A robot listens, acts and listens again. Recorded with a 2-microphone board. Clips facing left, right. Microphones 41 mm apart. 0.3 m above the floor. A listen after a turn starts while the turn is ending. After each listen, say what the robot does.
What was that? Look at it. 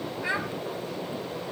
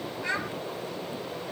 Turn 30° left.
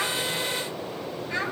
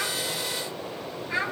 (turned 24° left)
Found it: a child speaking, straight ahead, 1 to 2 m away.